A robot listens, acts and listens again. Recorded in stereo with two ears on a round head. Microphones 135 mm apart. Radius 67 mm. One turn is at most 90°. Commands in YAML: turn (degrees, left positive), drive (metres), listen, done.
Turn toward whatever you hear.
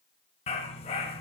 turn: 40
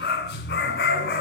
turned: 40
turn: 90
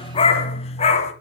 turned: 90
turn: 45
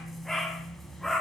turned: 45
done: "Facing the dog barking, 1 to 2 m away."